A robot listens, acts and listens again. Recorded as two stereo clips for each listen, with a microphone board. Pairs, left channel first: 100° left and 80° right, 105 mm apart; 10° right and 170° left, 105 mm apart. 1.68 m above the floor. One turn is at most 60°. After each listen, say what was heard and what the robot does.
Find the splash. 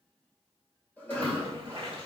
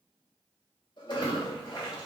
The splash: 50° right. Turn 50° right.
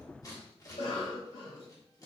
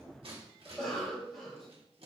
I heard a splash from this way, but can't make it out now.